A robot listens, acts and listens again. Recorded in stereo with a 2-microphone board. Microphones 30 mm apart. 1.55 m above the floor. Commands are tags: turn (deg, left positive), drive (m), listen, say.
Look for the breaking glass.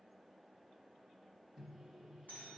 <listen/>
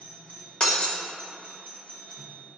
<turn deg="35"/>
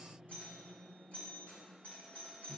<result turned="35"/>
<listen/>
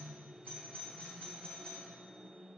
<say>I heard breaking glass, but can't make it out now. It was about straight ahead or 110° left.</say>